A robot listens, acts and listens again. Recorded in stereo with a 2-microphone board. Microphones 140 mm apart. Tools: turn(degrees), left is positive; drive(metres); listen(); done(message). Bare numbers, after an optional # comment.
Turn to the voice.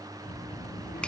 turn(90)
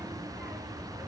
done("Facing the child speaking, over 4 m away.")